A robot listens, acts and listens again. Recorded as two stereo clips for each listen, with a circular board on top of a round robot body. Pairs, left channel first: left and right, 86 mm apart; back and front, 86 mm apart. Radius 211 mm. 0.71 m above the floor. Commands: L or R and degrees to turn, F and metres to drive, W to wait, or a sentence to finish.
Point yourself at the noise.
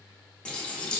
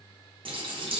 L10
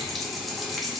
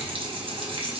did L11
Facing the running tap.